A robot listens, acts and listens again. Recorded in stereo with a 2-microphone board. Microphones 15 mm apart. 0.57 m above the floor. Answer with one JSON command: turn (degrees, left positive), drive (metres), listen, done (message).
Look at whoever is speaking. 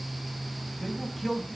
{"turn": -30}
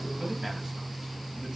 {"listen": true}
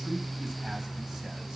{"listen": true}
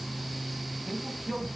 {"turn": -140}
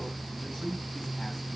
{"turn": 35}
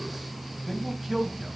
{"done": "Found it: a man speaking, straight ahead."}